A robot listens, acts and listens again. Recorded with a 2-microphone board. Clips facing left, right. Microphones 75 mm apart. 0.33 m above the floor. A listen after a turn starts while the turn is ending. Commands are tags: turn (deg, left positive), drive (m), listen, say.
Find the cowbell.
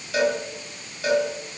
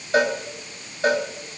<turn deg="-40"/>
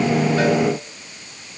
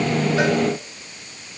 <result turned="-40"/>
<listen/>
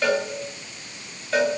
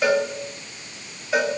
<turn deg="-10"/>
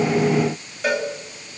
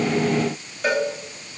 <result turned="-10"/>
<say>Found it: a cowbell, straight ahead.</say>